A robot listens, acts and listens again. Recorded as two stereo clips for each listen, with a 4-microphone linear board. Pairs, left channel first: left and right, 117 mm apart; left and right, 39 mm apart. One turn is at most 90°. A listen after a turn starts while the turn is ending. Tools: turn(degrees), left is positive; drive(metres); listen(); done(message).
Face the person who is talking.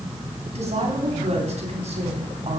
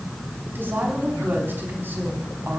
turn(degrees=-65)
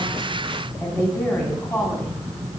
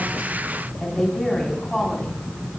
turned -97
turn(degrees=25)
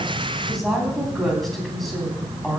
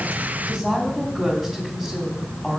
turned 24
done("Facing the woman speaking.")